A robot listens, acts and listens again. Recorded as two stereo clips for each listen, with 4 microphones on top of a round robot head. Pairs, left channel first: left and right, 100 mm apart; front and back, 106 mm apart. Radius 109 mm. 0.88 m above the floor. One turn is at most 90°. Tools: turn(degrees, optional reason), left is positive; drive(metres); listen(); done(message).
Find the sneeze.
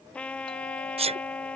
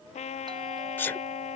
turn(degrees=-75, reason="The sneeze: 75° right.")
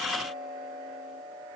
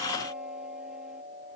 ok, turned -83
turn(degrees=10, reason="Nothing new. It was at 10° left.")
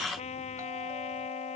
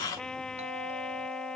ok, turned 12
done("I heard a sneeze from this way, but can't make it out now.")